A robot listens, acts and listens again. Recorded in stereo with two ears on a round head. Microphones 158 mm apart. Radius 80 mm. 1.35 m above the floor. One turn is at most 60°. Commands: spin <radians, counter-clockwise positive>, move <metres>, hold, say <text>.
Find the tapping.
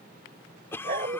hold
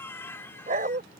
hold
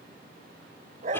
say I can't make out tapping to turn to.